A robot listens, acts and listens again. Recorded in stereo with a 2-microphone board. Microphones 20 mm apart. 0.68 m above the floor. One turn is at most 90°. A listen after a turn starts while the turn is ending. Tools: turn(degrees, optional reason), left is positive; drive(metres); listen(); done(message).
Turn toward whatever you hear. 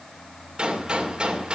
turn(degrees=-55, reason="The gunshot: about 55° right or 125° right.")
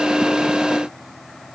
listen()
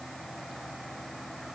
done("I heard a gunshot, but can't make it out now. It was about straight ahead or 70° right.")